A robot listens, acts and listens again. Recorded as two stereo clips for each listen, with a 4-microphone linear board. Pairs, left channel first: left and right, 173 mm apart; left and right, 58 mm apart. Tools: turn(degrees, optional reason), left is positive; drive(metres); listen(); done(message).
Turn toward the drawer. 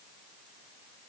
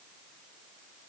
listen()
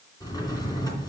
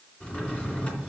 turn(degrees=25, reason="The drawer: about 25° left or 155° left.")
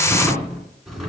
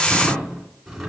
done("Facing the drawer.")